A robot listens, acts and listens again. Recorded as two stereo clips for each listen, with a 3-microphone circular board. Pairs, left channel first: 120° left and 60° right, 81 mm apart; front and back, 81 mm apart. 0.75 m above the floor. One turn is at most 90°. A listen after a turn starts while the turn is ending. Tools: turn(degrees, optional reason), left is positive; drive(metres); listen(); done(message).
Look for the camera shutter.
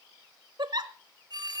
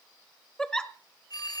listen()
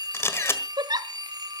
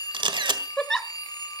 turn(degrees=90, reason="The camera shutter: 175° left.")
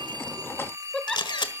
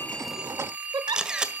turn(degrees=90, reason="The camera shutter is now 100° left.")
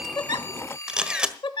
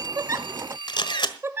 turn(degrees=20, reason="The camera shutter is now 20° left.")
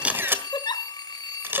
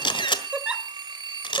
done("Found it: a camera shutter, straight ahead.")